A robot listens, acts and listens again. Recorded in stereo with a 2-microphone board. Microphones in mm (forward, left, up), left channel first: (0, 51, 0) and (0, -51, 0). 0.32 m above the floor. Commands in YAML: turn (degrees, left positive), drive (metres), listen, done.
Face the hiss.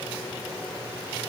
listen: true
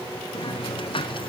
turn: 60
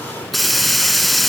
done: "Facing the hiss, 2 to 4 m away."